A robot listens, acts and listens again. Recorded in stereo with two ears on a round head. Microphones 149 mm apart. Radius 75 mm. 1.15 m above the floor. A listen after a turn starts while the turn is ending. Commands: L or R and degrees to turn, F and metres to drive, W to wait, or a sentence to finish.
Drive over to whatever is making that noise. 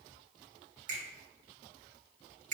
R50
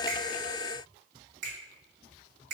R80
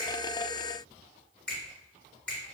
F1.0
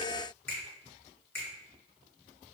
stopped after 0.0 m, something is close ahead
L15
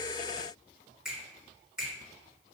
Blocked. The finger snap is further on, straight ahead.